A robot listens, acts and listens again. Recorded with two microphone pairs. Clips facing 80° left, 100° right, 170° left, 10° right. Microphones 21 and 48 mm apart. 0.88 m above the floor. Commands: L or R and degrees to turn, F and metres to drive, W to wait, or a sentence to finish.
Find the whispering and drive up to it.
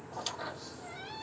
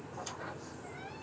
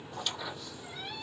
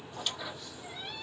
W
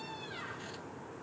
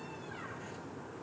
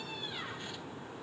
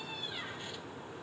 W
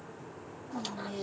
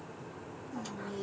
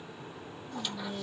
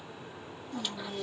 L30
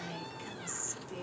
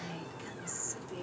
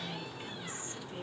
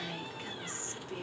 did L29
F1.0
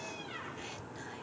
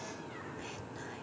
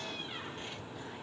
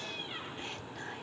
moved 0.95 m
W
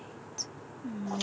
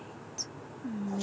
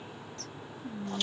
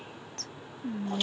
F1.0
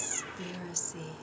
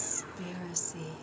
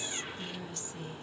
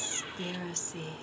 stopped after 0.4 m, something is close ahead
I am next to the whispering.